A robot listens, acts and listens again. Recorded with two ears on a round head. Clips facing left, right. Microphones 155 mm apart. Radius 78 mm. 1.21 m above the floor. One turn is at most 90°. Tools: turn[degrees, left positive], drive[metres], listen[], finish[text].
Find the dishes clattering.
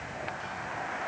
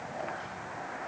Action: listen[]
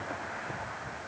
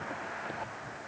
Action: listen[]
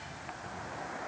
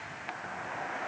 Action: finish[I can't make out dishes clattering.]